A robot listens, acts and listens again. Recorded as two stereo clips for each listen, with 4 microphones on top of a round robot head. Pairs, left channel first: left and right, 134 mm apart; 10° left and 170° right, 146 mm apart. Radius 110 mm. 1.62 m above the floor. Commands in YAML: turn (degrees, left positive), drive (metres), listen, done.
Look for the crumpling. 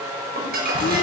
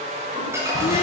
turn: -95
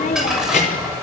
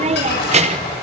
done: "Found it: crumpling, straight ahead, over 4 m away."